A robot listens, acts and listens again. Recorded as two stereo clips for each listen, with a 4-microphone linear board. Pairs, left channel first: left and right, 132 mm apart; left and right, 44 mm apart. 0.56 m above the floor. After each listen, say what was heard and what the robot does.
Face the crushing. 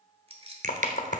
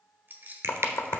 The crushing: about 70° right or 110° right. Turn 70° right.
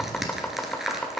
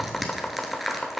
Facing the crushing.